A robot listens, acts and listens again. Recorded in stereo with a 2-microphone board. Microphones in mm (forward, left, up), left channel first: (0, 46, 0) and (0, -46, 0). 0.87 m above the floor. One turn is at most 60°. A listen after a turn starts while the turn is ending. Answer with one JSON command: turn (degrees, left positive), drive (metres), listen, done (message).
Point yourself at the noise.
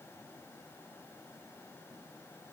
{"listen": true}
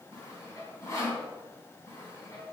{"turn": 30}
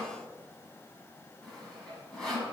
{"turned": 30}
{"done": "Found it: sawing, straight ahead."}